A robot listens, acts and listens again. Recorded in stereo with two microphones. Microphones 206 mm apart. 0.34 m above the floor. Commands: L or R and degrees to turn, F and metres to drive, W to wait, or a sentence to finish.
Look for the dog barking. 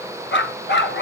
L60
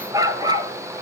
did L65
R20
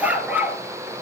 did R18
R10
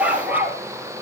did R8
R10
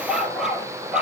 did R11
Facing the dog barking, 2 to 4 m away.